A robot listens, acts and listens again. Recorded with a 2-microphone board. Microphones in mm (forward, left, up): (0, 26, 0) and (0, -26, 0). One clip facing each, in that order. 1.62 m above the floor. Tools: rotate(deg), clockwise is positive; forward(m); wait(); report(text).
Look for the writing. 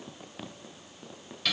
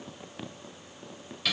wait()
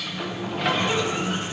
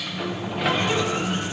wait()
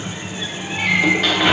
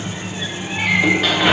report("I can't make out writing, only a sliding door.")